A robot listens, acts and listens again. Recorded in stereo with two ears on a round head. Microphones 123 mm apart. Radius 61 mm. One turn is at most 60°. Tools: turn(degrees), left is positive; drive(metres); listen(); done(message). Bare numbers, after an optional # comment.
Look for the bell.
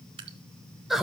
listen()
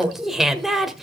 listen()
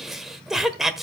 done("I can't make out a bell to turn to.")